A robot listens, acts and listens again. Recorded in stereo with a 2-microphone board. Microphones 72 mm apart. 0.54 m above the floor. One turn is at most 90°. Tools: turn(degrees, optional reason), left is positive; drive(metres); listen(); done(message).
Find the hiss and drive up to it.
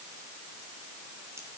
listen()
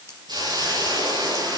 turn(degrees=-65, reason="The hiss: about 65° right or 115° right.")
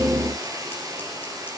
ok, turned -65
turn(degrees=-50, reason="So it is at 50° right.")
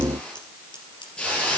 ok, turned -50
turn(degrees=15, reason="The hiss is now 15° left.")
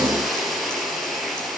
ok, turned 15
drive(metres=1.0)
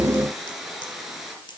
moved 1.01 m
drive(metres=1.0)
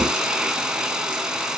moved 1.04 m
turn(degrees=-10, reason="The hiss is now 10° right.")
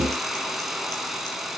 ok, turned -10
drive(metres=1.0)
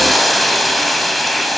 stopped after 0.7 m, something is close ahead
done("I am next to the hiss.")